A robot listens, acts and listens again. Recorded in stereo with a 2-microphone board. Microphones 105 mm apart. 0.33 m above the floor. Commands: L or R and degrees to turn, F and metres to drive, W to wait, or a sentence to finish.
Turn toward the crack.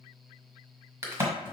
R25
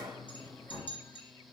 W
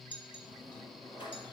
I heard a crack, but can't make it out now. It was about straight ahead or 130° right.